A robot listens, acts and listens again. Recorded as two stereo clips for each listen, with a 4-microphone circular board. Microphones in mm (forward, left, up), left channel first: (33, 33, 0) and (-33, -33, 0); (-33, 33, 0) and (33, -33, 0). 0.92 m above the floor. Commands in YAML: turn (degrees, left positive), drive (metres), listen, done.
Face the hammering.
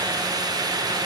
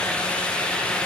listen: true
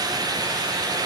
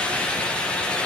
listen: true
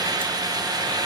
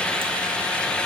done: "I can't make out hammering."